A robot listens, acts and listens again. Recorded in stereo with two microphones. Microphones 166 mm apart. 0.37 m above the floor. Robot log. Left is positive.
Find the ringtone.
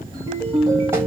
note: The ringtone: about 30° left or 150° left.
cmd yaw +30
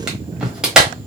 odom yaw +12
cmd idle
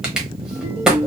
note: So it is at 140° left.
cmd yaw +140
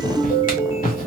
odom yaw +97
note: The ringtone is now 40° left.
cmd yaw +40
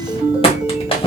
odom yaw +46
end: Found it: a ringtone, straight ahead.